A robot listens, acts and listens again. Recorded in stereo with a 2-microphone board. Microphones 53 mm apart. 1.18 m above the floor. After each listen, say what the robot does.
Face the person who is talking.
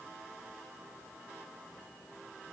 Keep listening.
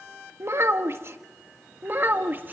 Turn 40° right.
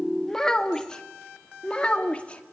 Turn 25° left.
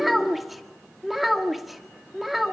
Facing the child speaking.